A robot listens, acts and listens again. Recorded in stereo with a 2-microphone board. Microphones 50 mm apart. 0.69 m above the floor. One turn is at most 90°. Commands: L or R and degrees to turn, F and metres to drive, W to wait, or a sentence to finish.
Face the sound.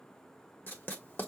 L40
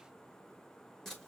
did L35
Found it: writing, straight ahead, 1 to 2 m away.